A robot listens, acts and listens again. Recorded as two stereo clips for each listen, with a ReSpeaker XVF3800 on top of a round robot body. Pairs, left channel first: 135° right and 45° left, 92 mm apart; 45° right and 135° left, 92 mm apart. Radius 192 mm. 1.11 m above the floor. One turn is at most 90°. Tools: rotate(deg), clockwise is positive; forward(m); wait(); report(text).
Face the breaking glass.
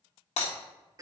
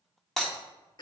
rotate(90)
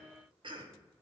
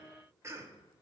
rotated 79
rotate(50)
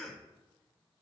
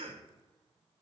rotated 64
rotate(-10)
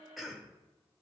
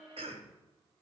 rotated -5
report("Facing where the breaking glass came from. I can't hear it now.")